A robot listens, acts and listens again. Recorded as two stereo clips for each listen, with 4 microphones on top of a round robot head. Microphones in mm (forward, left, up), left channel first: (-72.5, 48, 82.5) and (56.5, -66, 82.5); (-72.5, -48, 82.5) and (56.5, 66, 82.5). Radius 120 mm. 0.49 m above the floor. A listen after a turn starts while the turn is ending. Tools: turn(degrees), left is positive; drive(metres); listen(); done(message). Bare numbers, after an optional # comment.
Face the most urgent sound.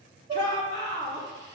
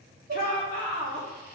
# The shout: 160° right.
turn(-160)
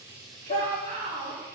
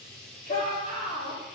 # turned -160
# The shout is now 10° left.
turn(10)
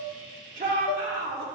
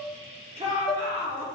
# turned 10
done("Facing the shout.")